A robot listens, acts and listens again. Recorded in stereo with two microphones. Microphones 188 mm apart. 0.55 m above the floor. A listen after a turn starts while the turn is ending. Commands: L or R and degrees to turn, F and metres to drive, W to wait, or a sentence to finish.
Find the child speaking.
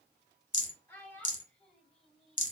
L30
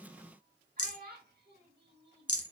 R70
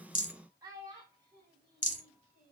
R30
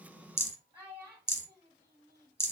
R10
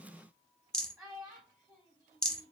Facing the child speaking.